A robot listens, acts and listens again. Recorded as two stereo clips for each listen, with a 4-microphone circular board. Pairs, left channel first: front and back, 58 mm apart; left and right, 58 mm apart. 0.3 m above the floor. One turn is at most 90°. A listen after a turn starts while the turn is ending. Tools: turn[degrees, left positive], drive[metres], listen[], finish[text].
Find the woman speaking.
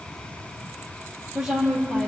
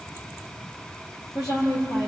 Thought: The woman speaking: 105° left.
Action: turn[90]
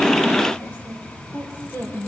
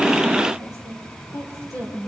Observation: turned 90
Thought: The woman speaking is now 60° left.
Action: turn[60]
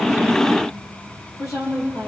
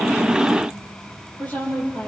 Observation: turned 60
Thought: The woman speaking is now 25° left.
Action: turn[25]
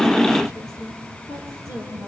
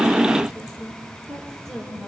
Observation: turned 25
Action: finish[Facing the woman speaking.]